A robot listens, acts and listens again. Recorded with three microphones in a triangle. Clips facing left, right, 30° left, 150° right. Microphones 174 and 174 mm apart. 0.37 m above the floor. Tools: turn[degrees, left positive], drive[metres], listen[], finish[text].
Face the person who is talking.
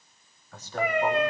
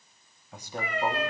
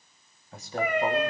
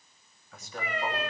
Thought: The man speaking: 20° right.
Action: turn[-20]
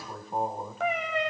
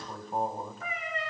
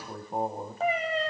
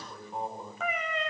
Action: finish[Facing the man speaking, 2 to 4 m away.]